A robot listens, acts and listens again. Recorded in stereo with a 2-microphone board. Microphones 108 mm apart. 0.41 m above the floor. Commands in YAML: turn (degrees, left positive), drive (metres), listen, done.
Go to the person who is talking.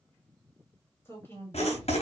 turn: 20
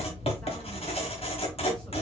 listen: true
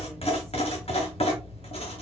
listen: true
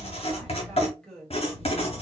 drive: 1.0
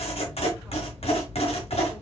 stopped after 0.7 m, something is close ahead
listen: true
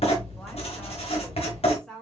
turn: 10
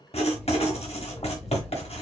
listen: true
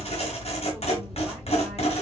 listen: true
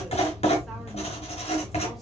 done: "I heard a woman speaking from this way, but can't make it out now. I did not reach it."